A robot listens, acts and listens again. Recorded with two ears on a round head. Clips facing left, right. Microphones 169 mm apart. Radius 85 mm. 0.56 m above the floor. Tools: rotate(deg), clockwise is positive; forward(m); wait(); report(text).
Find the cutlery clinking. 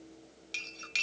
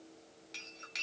rotate(-40)
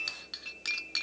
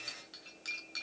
rotate(-100)
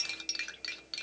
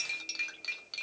rotate(-10)
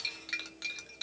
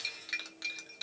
report("Found it: cutlery clinking, straight ahead.")